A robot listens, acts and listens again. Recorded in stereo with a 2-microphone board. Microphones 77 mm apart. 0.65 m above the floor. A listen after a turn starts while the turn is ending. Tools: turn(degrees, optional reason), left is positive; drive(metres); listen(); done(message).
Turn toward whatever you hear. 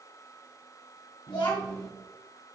turn(degrees=70, reason="The child speaking: about 70° left or 110° left.")
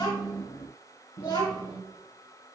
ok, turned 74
turn(degrees=80, reason="So it is at 80° left.")
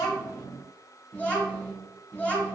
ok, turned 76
turn(degrees=20, reason="The child speaking is now 20° left.")
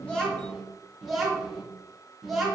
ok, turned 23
done("Facing the child speaking, 2 to 4 m away.")